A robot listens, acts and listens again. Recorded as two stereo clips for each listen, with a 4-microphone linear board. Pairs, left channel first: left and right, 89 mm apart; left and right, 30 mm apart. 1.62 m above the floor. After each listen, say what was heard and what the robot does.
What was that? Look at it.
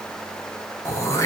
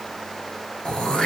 The throat clearing: about 30° left or 150° left. Turn 30° left.
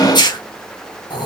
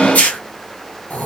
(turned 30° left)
So it is at 115° left. Turn 115° left.
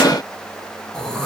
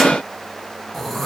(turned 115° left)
The throat clearing is now 10° left. Turn 10° left.
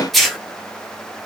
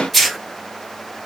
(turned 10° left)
Found it: throat clearing, straight ahead.